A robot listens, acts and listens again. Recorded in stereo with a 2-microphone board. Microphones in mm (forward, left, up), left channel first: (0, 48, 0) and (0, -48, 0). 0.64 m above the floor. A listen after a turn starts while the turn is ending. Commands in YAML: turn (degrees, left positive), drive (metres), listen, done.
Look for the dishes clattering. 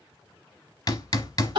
listen: true
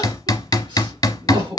listen: true
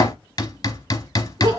done: "I can't make out dishes clattering to turn to."